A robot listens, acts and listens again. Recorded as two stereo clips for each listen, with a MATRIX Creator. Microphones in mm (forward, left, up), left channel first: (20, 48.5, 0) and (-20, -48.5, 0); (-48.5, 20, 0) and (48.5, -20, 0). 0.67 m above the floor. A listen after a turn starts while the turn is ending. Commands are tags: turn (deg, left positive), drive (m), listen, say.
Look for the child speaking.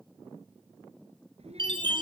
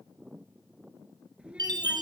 <turn deg="-105"/>
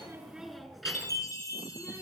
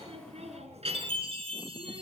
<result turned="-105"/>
<turn deg="-20"/>
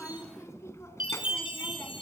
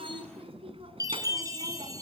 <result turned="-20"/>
<say>Found it: a child speaking, straight ahead, 2 to 4 m away.</say>